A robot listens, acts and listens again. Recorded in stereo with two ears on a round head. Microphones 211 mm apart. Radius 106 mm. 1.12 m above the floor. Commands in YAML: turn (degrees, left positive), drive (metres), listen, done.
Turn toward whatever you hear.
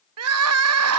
turn: -65
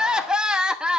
done: "Facing the crying, under 1 m away."